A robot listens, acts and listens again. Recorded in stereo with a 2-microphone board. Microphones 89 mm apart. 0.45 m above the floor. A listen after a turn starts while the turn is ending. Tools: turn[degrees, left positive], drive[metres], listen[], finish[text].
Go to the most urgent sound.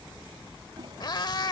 Action: listen[]
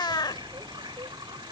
Action: listen[]
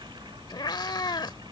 Action: finish[I can't make out anything urgent, only a toilet flushing and a cat meowing.]